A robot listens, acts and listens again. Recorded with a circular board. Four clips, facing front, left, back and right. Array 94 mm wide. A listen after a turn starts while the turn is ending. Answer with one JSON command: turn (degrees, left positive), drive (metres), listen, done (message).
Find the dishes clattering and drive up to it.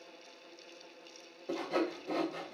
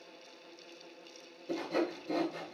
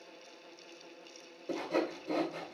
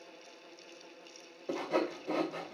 {"listen": true}
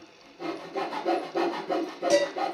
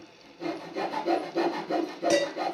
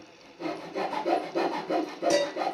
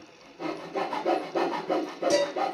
{"turn": 65}
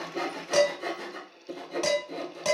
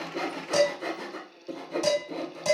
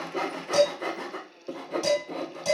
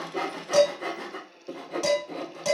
{"turn": -10}
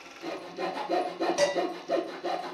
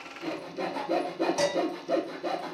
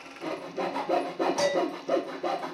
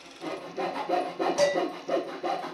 {"drive": 1.0}
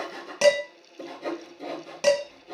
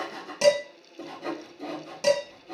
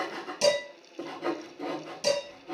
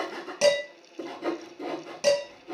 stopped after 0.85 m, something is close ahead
{"done": "I am next to the dishes clattering."}